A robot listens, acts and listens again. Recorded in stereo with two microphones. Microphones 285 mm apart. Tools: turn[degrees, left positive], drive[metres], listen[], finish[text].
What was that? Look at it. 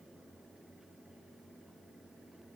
Action: listen[]
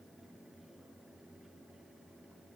Action: listen[]
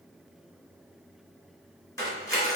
Action: turn[30]
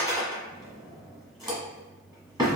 Thought: So it is at 15° right.
Action: turn[-15]
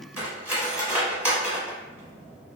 Action: finish[Facing the cutlery clinking.]